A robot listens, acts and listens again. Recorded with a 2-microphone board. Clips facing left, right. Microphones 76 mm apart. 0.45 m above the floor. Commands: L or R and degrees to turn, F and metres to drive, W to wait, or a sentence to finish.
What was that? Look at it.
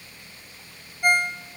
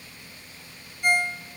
L55
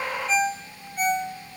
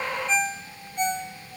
Facing the ringtone.